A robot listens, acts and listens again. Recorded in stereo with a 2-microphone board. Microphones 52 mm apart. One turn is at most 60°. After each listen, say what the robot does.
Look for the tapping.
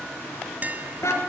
Turn 30° right.
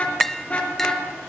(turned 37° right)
Turn 10° left.
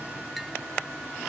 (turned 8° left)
Keep listening.
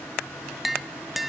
Facing the tapping, 1 to 2 m away.